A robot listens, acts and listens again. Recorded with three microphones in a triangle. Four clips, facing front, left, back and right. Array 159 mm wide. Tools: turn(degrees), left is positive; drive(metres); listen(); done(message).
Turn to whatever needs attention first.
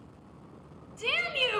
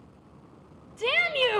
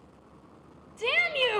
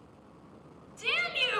turn(degrees=115)
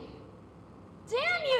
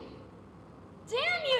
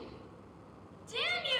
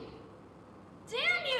turn(degrees=30)
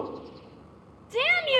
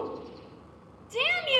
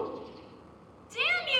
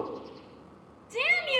turn(degrees=10)
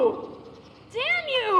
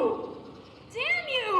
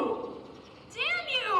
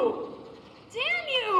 done("Facing the shout.")